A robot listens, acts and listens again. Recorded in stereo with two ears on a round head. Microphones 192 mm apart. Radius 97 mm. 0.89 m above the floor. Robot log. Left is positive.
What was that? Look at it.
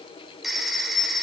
cmd yaw +30
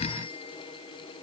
cmd idle
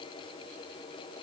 cmd idle
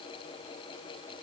end: I heard a phone ringing, but can't make it out now. It was about 30° right or 150° left.